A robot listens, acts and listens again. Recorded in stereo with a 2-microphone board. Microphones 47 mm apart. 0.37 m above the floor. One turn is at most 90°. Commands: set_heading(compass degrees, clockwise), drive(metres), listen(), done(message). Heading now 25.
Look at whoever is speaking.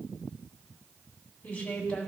set_heading(0)
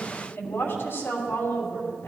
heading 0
set_heading(270)
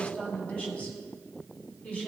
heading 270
set_heading(240)
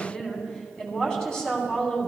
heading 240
set_heading(225)
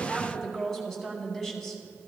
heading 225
done("Found it: a woman speaking, straight ahead.")